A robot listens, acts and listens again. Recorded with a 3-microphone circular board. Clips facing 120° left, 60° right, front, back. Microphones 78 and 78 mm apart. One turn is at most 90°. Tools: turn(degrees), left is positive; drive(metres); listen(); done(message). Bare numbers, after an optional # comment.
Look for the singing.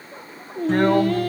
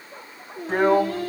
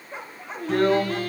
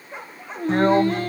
# The singing: 120° left.
turn(90)
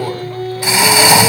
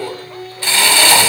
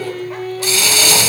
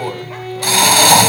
# The singing is now 90° left.
turn(90)
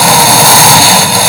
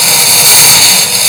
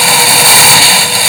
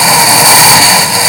listen()
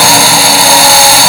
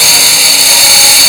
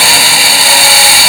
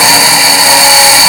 listen()
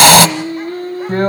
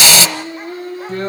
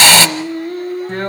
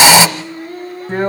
# The singing is now 15° left.
turn(15)
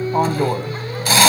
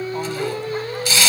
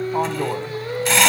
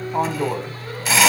done("Facing the singing, over 4 m away.")